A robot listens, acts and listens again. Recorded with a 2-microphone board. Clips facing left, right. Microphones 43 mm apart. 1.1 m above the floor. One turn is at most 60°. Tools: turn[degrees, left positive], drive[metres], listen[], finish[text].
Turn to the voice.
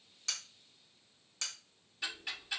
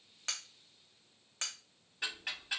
Action: listen[]
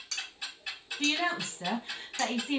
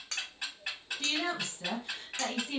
Thought: The woman speaking: about 30° left or 150° left.
Action: turn[30]
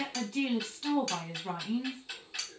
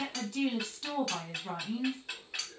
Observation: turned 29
Action: finish[Found it: a woman speaking, straight ahead, under 1 m away.]